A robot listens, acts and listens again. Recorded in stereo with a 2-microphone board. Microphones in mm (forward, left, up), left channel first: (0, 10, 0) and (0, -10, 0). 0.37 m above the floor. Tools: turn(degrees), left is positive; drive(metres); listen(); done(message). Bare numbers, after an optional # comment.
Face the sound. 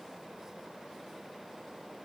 listen()
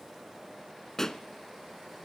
# The pop: about 30° left or 150° left.
turn(30)
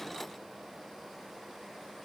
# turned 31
listen()
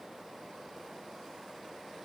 done("I heard a pop, but can't make it out now. It was about straight ahead or 120° left.")